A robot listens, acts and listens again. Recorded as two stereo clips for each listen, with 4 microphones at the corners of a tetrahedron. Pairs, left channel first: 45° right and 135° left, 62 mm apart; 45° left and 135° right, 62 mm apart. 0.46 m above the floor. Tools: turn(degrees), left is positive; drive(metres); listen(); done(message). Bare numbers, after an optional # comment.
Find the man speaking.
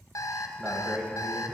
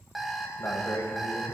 # The man speaking: 80° left.
turn(80)
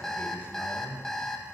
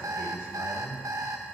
# The man speaking is now 15° left.
turn(15)
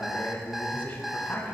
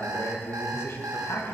# The man speaking is now 15° left.
turn(15)
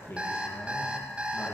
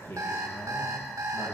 done("Facing the man speaking, 2 to 4 m away.")